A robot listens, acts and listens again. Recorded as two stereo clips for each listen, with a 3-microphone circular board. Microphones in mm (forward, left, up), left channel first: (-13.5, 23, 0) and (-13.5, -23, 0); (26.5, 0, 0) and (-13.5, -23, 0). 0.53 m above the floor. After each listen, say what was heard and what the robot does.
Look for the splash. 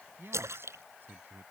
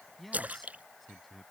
The splash: 90° right. Turn 90° right.
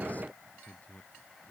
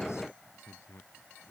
I heard a splash from this way, but can't make it out now.